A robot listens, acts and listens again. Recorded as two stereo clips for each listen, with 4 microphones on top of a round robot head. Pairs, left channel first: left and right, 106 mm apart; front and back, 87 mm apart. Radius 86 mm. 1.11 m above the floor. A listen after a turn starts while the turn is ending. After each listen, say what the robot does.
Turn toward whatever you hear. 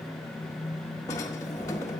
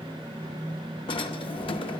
Turn 20° left.
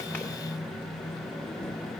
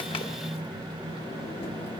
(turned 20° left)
Keep listening.
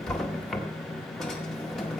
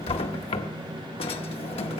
Found it: a drawer, straight ahead.